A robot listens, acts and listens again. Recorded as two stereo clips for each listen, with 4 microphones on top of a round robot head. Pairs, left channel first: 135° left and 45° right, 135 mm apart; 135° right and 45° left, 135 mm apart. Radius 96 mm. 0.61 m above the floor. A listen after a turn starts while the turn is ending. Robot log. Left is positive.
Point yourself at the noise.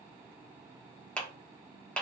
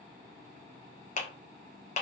note: The clap: 145° right.
cmd yaw -145
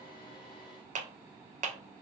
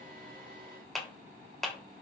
note: The clap is now 45° right.
cmd yaw -45
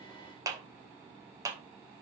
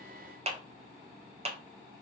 note: The clap is now 15° left.
cmd yaw +15
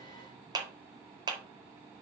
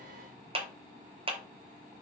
end: Facing the clap.